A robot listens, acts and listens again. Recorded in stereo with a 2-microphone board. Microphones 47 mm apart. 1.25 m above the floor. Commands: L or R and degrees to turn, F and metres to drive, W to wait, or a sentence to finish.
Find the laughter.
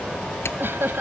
R55
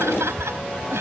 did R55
R70
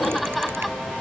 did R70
Facing the laughter.